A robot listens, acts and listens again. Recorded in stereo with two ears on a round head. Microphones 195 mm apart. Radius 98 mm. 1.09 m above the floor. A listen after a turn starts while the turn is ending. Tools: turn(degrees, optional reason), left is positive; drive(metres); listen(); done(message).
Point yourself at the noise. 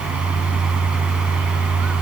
listen()
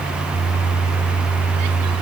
listen()
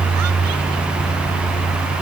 done("I can't make out anything.")